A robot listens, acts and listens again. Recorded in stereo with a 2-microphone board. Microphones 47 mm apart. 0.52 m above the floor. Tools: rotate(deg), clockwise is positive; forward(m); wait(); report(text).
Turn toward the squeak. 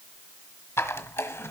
rotate(-65)
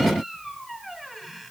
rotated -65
wait()
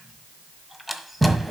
report("Found it: a squeak, straight ahead.")